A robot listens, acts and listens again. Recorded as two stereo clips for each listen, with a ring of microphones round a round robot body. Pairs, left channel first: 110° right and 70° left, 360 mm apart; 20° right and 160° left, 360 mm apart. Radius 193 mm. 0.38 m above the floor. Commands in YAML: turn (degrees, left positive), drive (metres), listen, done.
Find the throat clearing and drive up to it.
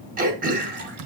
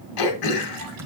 drive: 1.0
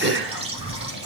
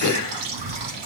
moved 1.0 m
turn: 10
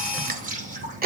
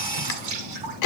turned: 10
drive: 1.0
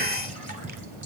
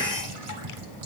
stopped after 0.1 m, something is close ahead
listen: true
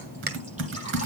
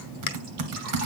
done: "I am next to the throat clearing."